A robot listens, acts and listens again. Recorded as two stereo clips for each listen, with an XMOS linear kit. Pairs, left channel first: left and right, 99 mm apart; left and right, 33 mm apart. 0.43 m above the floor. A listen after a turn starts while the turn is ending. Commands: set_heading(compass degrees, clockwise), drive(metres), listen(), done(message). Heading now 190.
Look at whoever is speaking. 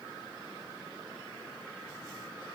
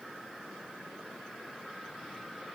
listen()
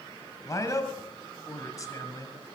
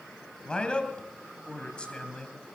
set_heading(155)
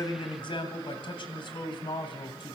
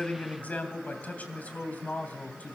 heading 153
set_heading(48)
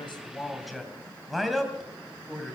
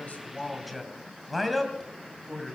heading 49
done("Facing the man speaking.")